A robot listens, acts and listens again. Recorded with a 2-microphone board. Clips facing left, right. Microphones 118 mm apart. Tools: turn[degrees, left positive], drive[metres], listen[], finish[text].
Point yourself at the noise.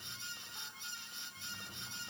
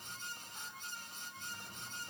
Action: listen[]
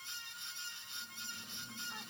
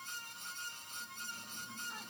Action: listen[]
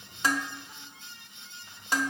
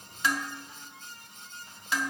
Thought: The dishes clattering: about 40° left or 140° left.
Action: turn[40]
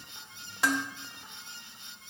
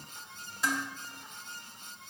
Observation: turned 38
Thought: So it is at 95° left.
Action: turn[95]
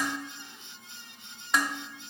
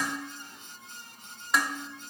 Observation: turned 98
Action: finish[Found it: dishes clattering, straight ahead.]